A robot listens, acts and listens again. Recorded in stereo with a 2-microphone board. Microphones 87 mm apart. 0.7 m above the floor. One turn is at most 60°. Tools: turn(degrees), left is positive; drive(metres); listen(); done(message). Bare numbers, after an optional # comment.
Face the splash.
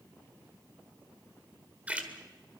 # The splash: about 15° right or 165° right.
turn(-15)
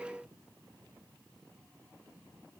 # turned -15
listen()
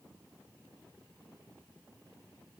done("I heard a splash, but can't make it out now. It was about straight ahead or 150° right.")